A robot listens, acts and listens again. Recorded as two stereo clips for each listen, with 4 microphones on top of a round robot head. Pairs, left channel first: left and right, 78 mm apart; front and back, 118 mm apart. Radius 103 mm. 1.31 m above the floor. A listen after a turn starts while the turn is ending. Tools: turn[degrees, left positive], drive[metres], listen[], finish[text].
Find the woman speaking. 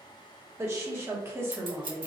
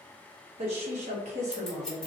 Thought: The woman speaking: 155° right.
Action: turn[-155]
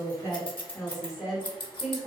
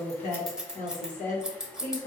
Action: finish[Found it: a woman speaking, straight ahead, 1 to 2 m away.]